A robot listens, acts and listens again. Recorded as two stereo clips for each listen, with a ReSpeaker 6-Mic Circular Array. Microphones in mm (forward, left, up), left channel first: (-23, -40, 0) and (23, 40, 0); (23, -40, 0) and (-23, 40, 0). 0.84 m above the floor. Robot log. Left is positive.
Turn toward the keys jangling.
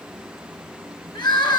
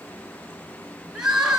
cmd idle
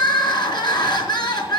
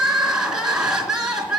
cmd idle
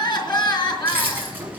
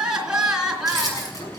note: The keys jangling: 10° right.
cmd yaw -10
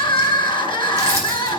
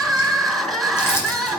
cmd idle
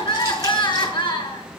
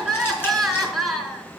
cmd idle
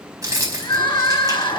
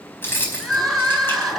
end: Facing the keys jangling.